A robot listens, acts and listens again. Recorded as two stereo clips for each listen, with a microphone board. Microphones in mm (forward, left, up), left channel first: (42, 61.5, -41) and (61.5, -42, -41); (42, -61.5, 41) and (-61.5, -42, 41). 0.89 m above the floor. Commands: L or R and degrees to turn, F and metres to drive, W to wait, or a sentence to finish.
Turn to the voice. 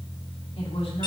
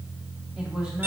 L85
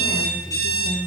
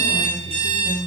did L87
Found it: a woman speaking, straight ahead, 2 to 4 m away.